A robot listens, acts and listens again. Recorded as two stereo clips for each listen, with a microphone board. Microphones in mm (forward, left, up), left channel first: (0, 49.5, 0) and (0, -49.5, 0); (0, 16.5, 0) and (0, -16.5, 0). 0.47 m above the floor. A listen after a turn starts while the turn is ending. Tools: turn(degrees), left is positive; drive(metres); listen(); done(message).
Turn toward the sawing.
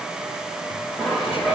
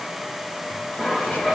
turn(degrees=30)
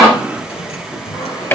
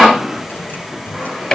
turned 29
listen()
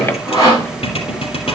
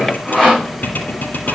turn(degrees=150)
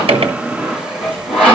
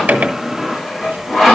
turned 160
turn(degrees=-10)
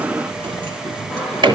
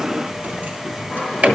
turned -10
done("Facing the sawing, over 4 m away.")